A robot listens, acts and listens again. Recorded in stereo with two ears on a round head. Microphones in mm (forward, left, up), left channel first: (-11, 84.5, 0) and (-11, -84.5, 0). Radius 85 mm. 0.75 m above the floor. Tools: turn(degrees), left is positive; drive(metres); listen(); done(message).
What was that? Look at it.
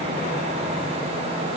listen()
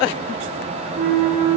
turn(degrees=-55)
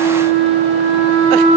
turn(degrees=-70)
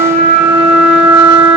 turn(degrees=-35)
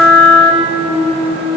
turn(degrees=10)
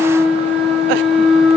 done("Found it: a flute, straight ahead.")